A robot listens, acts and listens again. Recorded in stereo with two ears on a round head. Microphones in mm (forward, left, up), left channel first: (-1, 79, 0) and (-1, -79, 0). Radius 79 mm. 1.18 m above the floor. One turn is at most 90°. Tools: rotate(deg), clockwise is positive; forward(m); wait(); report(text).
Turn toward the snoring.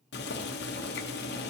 wait()
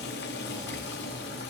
wait()
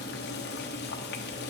report("I can't make out snoring, only boiling.")